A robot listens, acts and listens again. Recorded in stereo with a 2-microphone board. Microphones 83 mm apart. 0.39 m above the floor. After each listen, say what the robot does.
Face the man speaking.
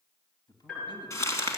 Turn 60° left.
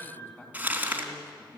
Turn 35° left.
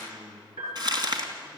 Found it: a man speaking, straight ahead.